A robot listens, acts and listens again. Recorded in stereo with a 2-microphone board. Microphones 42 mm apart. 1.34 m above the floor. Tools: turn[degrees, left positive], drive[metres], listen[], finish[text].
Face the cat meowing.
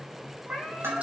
Thought: The cat meowing: about 35° right or 145° right.
Action: turn[-35]
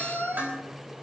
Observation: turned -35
Action: finish[Facing the cat meowing, over 4 m away.]